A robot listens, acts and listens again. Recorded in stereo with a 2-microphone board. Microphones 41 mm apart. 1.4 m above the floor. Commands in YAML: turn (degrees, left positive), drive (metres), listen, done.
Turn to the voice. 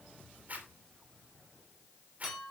listen: true
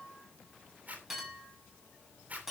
listen: true
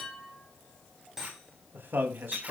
turn: -60
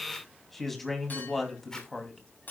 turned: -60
done: "Facing the man speaking."